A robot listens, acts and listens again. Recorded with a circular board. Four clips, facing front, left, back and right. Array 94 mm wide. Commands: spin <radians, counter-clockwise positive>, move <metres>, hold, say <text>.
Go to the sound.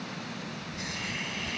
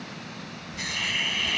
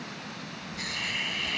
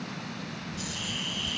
spin 1.75
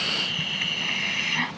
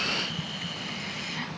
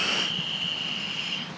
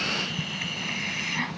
spin -0.35
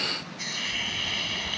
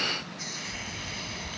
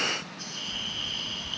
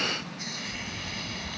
move 1.0
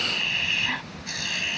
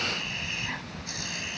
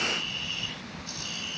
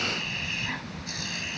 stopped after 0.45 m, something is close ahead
say Something is in my way. I am facing the hiss but have not reached it.